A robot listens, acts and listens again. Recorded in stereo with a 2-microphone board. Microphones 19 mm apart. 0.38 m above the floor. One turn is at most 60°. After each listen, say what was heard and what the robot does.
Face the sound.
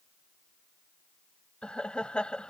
The laughter: about 60° left or 120° left. Turn 60° left.
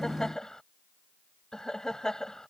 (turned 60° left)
So it is at 35° left. Turn 35° left.
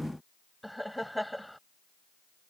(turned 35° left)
Facing the laughter.